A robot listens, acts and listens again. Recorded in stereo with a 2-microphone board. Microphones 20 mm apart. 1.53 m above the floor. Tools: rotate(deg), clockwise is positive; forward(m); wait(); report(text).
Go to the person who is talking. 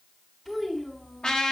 rotate(-30)
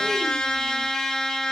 wait()
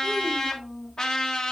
rotate(15)
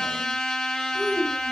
forward(1.0)
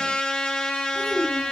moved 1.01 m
forward(1.0)
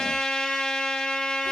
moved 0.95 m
wait()
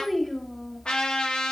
forward(1.0)
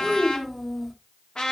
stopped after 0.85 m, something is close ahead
report("I am next to the child speaking.")